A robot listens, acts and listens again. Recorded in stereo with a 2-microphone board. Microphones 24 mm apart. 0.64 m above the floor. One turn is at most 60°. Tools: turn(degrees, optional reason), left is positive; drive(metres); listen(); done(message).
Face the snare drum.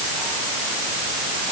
listen()
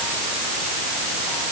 listen()
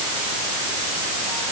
done("I can't make out a snare drum to turn to.")